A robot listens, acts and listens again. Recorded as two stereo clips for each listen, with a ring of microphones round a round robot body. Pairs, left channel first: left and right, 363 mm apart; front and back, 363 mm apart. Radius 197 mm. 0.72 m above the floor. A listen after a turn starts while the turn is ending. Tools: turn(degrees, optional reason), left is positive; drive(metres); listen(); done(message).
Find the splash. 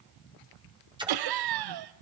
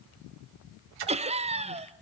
turn(degrees=-165, reason="The splash: 165° right.")
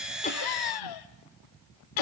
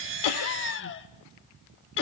done("Facing where the splash came from. I can't hear it now.")